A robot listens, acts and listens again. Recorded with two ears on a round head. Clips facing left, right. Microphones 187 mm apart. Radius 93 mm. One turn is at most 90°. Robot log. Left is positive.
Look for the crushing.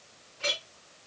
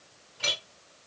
cmd idle
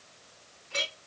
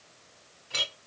cmd idle
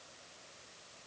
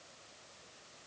end: I can't make out crushing, only a clink.